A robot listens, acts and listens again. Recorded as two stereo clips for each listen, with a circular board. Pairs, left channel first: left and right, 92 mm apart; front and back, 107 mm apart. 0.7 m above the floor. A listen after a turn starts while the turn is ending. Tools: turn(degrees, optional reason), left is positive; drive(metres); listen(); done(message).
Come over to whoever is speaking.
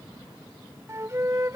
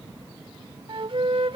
listen()
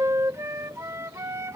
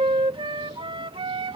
listen()
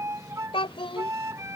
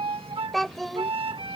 turn(degrees=90, reason="The child speaking: 90° left.")
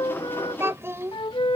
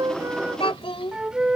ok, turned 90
turn(degrees=-30, reason="The child speaking is now 30° right.")
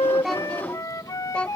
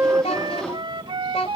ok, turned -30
turn(degrees=10, reason="The child speaking is now 10° left.")
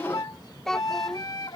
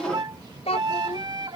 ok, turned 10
drive(metres=1.0)
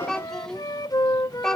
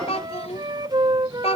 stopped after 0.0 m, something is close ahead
done("Blocked. The child speaking is further on, straight ahead.")